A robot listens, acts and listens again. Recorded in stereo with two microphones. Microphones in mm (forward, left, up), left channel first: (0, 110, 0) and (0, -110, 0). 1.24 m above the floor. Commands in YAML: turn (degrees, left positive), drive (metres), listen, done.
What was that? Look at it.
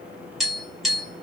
turn: 30
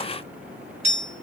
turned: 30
turn: -30
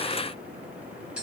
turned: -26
done: "Facing the tapping."